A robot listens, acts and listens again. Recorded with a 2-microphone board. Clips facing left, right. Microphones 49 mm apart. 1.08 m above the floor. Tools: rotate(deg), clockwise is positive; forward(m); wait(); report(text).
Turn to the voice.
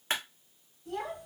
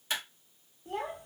rotate(45)
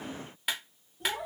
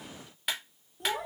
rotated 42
rotate(90)
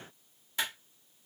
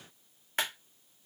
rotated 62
rotate(25)
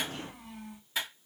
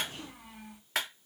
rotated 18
rotate(10)
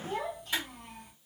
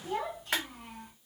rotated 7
report("Found it: a child speaking, straight ahead, 1 to 2 m away.")